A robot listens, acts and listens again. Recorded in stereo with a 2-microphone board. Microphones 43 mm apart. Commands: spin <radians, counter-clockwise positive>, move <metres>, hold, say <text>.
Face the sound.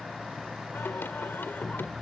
spin 1.05
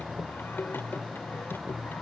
spin 1.05
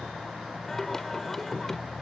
spin 0.17
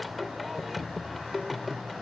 say Facing the singing.